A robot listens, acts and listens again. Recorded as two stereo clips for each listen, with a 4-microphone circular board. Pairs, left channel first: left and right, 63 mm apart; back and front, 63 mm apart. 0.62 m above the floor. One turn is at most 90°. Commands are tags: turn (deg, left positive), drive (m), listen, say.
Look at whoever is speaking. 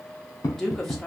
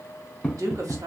<say>Facing the woman speaking.</say>